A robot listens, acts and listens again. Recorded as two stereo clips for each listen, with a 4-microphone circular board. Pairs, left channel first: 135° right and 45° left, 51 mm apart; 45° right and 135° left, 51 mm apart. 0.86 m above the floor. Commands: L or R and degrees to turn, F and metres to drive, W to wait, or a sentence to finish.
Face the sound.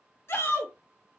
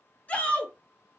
R105
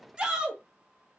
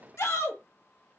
R25
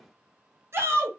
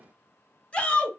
L20
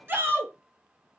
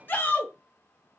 Found it: a shout, straight ahead, under 1 m away.